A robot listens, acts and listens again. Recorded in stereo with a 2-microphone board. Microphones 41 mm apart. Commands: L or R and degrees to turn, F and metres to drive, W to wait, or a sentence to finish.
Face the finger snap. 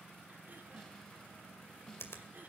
L70
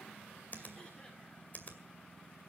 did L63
L40
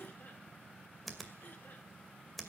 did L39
Found it: a finger snap, straight ahead.